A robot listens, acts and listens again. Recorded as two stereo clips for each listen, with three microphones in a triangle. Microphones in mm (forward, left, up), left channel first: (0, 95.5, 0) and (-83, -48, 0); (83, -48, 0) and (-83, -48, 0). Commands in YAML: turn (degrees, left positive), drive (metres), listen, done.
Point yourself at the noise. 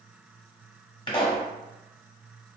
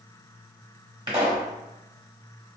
turn: 120
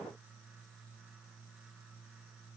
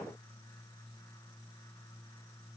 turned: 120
done: "I heard a pop from this way, but can't make it out now."